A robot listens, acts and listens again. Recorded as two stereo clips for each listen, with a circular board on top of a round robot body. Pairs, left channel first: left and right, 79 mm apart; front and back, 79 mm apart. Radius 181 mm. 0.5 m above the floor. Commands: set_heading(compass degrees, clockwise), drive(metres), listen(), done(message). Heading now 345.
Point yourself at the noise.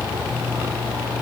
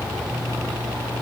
listen()
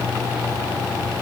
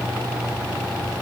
listen()
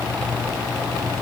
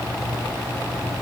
done("I can't make out anything.")